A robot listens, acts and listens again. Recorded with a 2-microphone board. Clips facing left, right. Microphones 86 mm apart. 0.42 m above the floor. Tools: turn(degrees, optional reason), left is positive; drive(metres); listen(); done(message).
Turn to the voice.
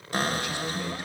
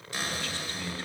turn(degrees=20, reason="The man speaking: about 20° left or 160° left.")
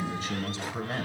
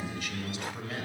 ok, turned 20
turn(degrees=140, reason="So it is at 140° left.")
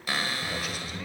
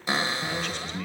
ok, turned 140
turn(degrees=10, reason="The man speaking is now 10° left.")
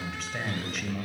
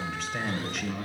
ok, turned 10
done("Found it: a man speaking, straight ahead.")